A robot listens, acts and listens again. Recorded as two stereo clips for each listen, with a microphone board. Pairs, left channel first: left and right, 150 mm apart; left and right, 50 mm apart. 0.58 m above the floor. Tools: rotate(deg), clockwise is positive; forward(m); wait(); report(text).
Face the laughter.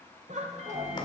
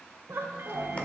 rotate(50)
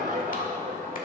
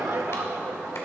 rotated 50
rotate(75)
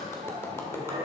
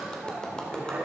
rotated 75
rotate(40)
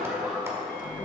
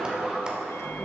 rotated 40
report("Facing the laughter.")